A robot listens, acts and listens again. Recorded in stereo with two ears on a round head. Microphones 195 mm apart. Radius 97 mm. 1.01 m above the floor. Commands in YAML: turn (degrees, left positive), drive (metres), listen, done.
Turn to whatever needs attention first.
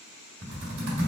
listen: true
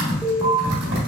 turn: -30
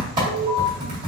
turn: 25
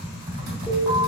listen: true
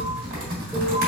listen: true
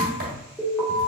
done: "Found it: an alarm, straight ahead, 1 to 2 m away."